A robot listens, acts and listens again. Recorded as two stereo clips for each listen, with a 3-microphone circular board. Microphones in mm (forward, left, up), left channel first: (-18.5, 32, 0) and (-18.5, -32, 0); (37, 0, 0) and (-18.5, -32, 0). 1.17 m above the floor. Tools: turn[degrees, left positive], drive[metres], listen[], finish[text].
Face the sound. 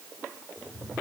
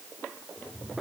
Thought: The cat meowing: 40° left.
Action: turn[40]
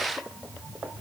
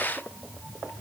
Thought: The cat meowing is now 15° right.
Action: turn[-15]
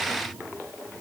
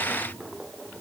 Action: finish[Found it: a cat meowing, straight ahead, over 4 m away.]